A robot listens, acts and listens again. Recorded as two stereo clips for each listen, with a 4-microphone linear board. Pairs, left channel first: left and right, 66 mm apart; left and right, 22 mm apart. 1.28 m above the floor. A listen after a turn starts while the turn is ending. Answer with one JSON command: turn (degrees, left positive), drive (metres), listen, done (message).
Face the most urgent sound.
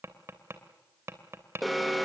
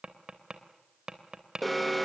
{"turn": 30}
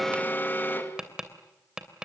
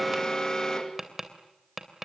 {"turn": 150}
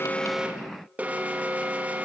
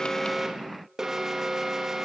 {"turn": -20}
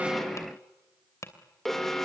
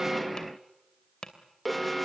{"done": "Facing the alarm."}